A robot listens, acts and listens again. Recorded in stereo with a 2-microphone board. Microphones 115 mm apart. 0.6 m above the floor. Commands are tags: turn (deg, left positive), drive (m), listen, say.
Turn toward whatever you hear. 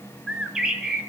<turn deg="-30"/>
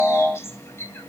<turn deg="25"/>
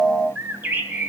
<turn deg="-15"/>
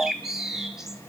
<say>Facing the bird.</say>